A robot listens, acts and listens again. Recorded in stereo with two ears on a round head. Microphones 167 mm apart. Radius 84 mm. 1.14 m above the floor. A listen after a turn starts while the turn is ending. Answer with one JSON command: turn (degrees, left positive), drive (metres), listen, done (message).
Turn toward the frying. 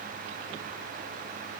{"listen": true}
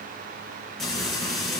{"turn": 30}
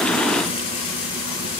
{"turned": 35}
{"turn": 145}
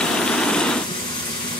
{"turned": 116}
{"turn": 25}
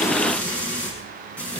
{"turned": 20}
{"done": "Facing the frying, over 4 m away."}